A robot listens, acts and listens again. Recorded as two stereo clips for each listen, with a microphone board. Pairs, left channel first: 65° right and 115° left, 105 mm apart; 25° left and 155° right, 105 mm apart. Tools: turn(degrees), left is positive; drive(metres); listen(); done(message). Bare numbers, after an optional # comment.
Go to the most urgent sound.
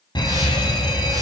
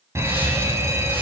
# The fire alarm: 100° right.
turn(-100)
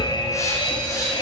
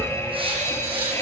# The fire alarm is now 35° right.
turn(-35)
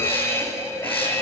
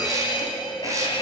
# The fire alarm is now 10° right.
turn(-10)
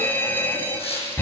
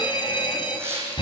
drive(1.0)
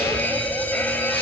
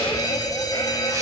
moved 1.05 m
drive(1.0)
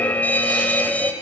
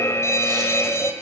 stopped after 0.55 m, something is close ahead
done("I am next to the fire alarm.")